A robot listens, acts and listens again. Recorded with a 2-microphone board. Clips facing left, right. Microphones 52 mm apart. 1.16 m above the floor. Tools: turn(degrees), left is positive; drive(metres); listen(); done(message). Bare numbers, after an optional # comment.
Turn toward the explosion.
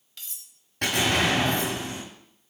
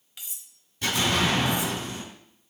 # The explosion: about 70° left or 110° left.
turn(70)
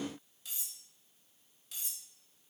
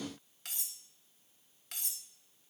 listen()
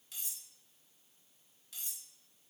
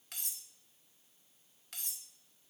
done("I heard an explosion, but can't make it out now. It was about straight ahead or 40° left.")